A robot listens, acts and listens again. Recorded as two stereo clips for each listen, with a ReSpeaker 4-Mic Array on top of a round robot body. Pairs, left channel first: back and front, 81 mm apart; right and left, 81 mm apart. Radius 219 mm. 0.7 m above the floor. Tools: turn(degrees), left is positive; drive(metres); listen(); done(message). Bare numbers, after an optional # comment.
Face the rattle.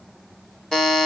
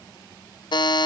listen()
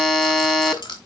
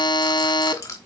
# The rattle: 150° right.
turn(-150)
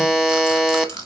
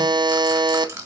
# The rattle is now 30° left.
turn(30)
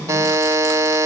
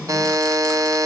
listen()
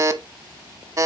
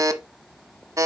listen()
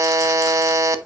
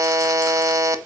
done("I heard a rattle from this way, but can't make it out now.")